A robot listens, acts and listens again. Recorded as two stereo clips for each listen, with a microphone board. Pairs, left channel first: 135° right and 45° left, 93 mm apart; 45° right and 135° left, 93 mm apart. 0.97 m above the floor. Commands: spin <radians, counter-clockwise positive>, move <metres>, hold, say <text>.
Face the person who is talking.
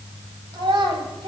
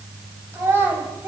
spin 1.22
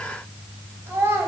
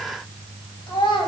spin -0.35
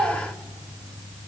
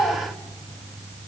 say Facing the child speaking.